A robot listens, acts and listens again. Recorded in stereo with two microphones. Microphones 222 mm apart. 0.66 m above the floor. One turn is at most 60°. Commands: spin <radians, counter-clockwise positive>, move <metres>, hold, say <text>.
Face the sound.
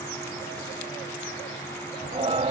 spin -0.52
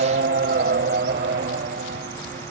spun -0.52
spin -1.05
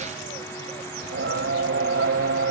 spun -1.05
spin -1.05
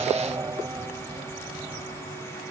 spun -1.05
spin -0.26
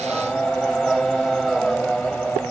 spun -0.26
say Facing the singing.